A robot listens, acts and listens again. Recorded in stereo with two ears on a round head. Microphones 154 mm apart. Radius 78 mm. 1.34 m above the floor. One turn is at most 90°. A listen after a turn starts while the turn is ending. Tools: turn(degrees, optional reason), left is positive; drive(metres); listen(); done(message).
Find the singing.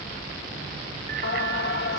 turn(degrees=60, reason="The singing: about 60° left or 120° left.")
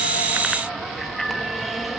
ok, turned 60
done("Facing the singing.")